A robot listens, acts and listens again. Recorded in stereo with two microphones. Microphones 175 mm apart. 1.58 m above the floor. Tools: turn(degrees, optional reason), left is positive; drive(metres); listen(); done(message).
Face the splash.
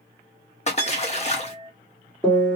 turn(degrees=40, reason="The splash: about 40° left or 140° left.")
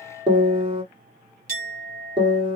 listen()
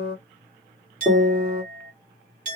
done("I heard a splash, but can't make it out now. It was about straight ahead or 100° left.")